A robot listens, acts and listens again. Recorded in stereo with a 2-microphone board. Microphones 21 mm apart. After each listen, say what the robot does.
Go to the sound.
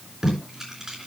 Turn 25° right.
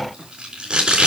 Turn 130° right.
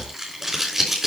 Turn 15° right.
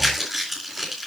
Drive 1.0 m forward.
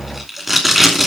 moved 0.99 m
Drive 1.0 m forward.
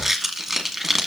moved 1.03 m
Turn 10° right.
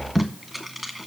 Drive 1.0 m forward.
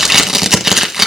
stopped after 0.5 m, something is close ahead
Turn 15° right.
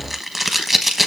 I am next to the tape being pulled.